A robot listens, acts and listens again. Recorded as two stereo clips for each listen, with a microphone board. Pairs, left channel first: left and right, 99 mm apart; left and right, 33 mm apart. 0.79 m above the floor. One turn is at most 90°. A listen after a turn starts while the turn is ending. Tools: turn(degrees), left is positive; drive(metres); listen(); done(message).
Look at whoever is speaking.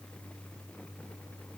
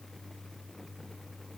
listen()
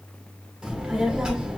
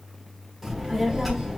turn(degrees=-30)
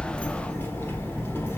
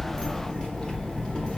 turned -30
turn(degrees=25)
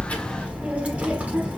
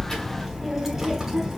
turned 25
turn(degrees=-15)
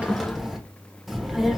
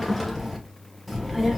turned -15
done("Found it: a child speaking, straight ahead, 1 to 2 m away.")